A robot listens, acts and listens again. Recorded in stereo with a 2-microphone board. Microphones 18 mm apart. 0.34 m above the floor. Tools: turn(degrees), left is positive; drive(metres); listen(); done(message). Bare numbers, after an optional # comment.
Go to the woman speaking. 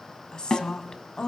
# The woman speaking: about 45° left or 135° left.
turn(45)
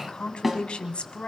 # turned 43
# So it is at 85° left.
turn(85)
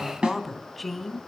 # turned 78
# The woman speaking is now 10° left.
turn(10)
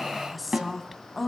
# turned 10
drive(1.0)
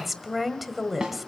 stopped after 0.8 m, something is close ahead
# The woman speaking is now 10° right.
turn(-10)
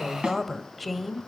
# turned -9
done("I am next to the woman speaking.")